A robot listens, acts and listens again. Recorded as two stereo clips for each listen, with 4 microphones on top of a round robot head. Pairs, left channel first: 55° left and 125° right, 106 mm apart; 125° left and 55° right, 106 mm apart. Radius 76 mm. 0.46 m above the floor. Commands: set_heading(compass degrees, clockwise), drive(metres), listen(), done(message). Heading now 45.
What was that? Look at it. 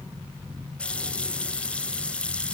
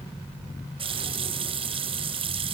set_heading(70)
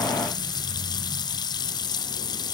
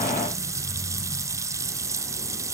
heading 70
done("Found it: a running tap, straight ahead, 1 to 2 m away.")